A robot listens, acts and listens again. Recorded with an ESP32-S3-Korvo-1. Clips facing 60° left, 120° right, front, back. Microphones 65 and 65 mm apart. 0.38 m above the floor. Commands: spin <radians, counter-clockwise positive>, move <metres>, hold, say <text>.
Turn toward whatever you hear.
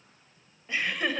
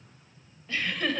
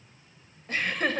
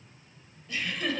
spin -0.17
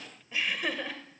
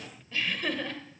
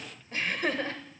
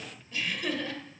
spin -0.35
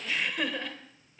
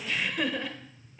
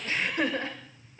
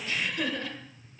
spin -0.61
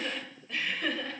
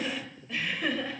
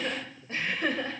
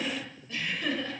spin -0.70
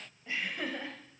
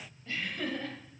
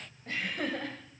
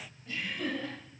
spin -0.17
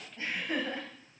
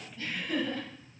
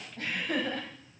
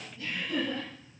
say Facing the laughter, 1 to 2 m away.